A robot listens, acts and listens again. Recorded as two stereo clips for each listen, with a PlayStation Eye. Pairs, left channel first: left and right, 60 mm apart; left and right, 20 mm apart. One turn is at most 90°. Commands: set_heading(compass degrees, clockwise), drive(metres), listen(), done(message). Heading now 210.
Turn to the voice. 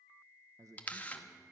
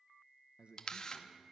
set_heading(265)
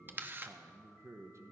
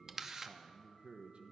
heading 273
set_heading(328)
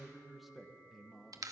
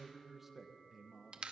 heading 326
done("Facing the man speaking.")